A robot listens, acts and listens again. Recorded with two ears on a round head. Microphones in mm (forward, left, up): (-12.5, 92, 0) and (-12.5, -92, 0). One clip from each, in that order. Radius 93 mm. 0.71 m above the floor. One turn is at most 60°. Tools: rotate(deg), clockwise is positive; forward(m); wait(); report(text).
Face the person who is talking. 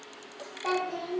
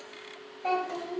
rotate(-25)
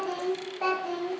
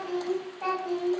rotate(-60)
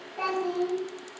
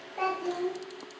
rotate(10)
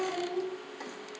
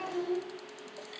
rotate(15)
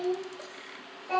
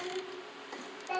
report("Facing the child speaking.")